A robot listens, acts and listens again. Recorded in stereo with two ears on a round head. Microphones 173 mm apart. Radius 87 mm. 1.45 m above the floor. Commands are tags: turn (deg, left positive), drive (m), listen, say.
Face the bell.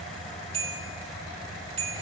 <turn deg="-35"/>
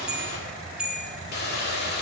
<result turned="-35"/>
<say>Facing the bell, 2 to 4 m away.</say>